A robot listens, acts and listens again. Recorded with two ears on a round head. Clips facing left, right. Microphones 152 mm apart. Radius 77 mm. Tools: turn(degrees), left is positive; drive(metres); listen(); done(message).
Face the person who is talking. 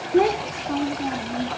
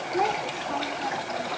turn(degrees=40)
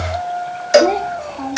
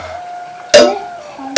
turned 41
done("Found it: a child speaking, straight ahead.")